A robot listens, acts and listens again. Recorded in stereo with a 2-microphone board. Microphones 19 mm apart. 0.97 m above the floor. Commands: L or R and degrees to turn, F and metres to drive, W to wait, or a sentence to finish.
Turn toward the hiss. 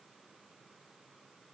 W
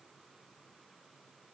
W
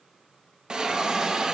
R55
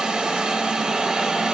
R60
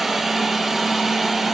R20
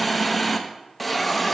Facing the hiss, 1 to 2 m away.